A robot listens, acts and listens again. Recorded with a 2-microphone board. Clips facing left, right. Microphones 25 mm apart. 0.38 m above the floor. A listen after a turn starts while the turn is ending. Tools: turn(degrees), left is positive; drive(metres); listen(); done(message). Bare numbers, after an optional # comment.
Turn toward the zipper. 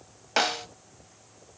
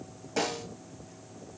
listen()
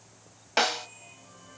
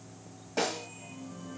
listen()
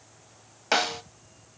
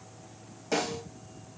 done("I can't make out a zipper, only a snare drum.")